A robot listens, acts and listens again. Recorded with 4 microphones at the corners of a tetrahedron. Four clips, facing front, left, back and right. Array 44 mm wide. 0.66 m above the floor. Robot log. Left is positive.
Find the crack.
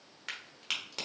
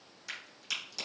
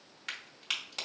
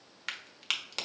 note: The crack: 90° right.
cmd yaw -90
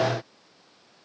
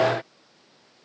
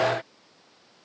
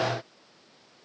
end: Facing where the crack came from. I can't hear it now.